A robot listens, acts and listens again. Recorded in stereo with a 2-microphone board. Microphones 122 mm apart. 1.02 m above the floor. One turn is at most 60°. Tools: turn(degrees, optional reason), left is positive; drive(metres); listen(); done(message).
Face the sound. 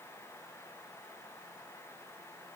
listen()
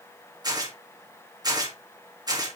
turn(degrees=-35, reason="The tearing paper: about 35° right or 145° right.")
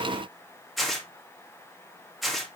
done("Facing the tearing paper.")